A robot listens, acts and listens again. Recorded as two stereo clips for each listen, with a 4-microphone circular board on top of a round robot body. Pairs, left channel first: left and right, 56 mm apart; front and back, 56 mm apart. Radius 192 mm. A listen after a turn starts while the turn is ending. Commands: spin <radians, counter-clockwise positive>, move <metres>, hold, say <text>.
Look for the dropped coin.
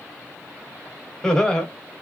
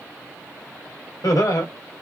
hold
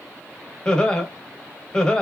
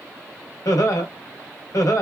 hold
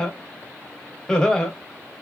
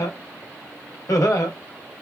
say I can't make out a dropped coin to turn to.